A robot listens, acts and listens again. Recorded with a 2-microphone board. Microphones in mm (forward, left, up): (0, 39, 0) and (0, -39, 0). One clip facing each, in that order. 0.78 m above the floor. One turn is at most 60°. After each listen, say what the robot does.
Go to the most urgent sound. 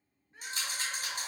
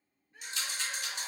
Turn 30° left.
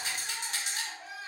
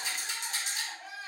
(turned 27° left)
Drive 1.0 m forward.
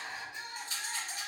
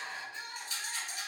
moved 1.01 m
Turn 20° left.
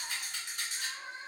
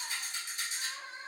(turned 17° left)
Drive 1.0 m forward.
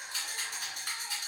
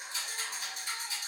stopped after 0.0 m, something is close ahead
Keep listening.
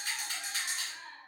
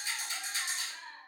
Arrived at the crying, straight ahead.